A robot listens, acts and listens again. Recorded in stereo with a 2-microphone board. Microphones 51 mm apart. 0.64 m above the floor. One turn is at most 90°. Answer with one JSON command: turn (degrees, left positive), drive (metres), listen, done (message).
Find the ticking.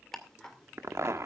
{"turn": 30}
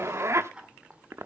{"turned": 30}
{"turn": -20}
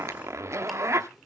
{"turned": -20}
{"listen": true}
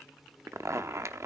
{"listen": true}
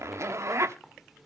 {"done": "Facing where the ticking came from. I can't hear it now."}